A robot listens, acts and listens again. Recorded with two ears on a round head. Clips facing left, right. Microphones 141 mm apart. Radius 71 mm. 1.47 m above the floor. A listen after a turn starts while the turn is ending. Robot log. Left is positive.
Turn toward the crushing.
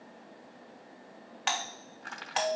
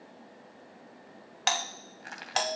cmd yaw -30
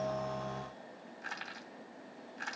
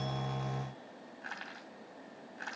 note: So it is at 15° left.
cmd yaw +15
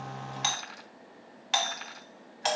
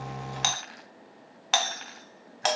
end: Found it: crushing, straight ahead.